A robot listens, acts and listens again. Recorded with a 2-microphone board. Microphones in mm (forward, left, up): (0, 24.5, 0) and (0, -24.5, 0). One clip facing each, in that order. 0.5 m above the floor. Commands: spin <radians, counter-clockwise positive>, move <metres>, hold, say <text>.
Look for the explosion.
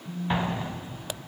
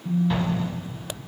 spin 0.44
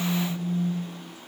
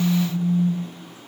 hold
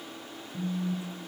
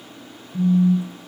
say I heard an explosion, but can't make it out now. It was about straight ahead or 130° left.